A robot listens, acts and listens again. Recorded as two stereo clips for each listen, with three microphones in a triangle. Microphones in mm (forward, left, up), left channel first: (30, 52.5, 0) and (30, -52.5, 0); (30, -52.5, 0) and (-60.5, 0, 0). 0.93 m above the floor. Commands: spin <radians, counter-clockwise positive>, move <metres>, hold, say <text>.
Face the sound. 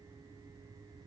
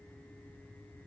hold
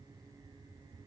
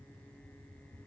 hold
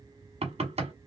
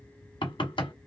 spin -1.22
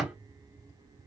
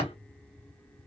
spin -0.26
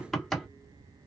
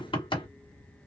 say Found it: knocking, straight ahead.